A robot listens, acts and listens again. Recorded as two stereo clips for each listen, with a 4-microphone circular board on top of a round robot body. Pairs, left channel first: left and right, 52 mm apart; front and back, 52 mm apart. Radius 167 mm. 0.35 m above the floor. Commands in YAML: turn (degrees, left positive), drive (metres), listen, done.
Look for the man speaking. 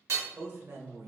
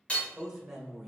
turn: -95
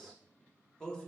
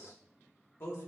turn: 20
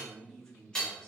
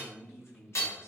turn: 25
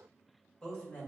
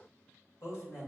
turn: 25
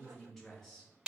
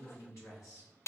turn: 10
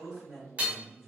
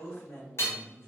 done: "Found it: a man speaking, straight ahead."